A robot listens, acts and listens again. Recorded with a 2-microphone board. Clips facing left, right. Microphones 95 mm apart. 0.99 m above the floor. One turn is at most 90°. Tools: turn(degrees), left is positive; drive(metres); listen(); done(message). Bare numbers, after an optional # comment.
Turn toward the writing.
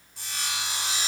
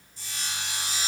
listen()
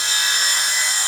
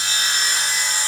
listen()
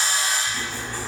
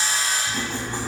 # The writing: about 20° right or 160° right.
turn(-20)
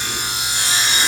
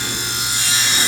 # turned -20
listen()
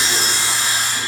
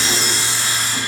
listen()
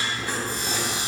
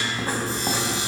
# So it is at 140° right.
turn(-90)
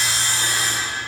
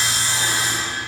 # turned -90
# Nothing new. It was at 50° right.
turn(-50)
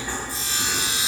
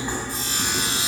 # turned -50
# The writing is now 20° right.
turn(-20)
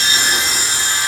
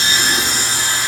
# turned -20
listen()
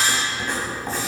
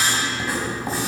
done("Found it: writing, straight ahead.")